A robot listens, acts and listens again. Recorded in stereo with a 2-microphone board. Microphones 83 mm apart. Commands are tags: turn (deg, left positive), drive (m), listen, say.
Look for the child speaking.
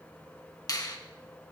<listen/>
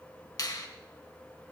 <listen/>
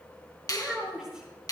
<turn deg="-30"/>
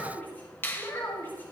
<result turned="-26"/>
<turn deg="25"/>
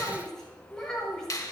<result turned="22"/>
<say>Facing the child speaking.</say>